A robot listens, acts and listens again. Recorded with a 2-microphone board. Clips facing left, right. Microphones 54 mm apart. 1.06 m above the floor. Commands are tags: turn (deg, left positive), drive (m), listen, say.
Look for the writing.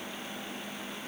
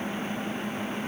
<listen/>
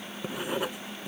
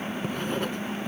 <turn deg="30"/>
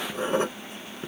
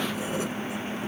<turn deg="135"/>
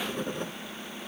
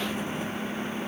<turn deg="50"/>
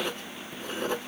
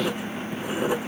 <turn deg="-15"/>
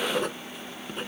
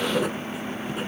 <say>Found it: writing, straight ahead.</say>